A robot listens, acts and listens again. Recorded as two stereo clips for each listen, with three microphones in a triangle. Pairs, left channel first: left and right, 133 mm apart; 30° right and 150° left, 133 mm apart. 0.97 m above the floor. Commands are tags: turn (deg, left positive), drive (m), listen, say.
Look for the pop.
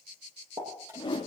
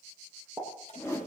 <turn deg="-135"/>
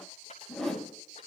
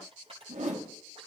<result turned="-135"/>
<say>Facing where the pop came from. I can't hear it now.</say>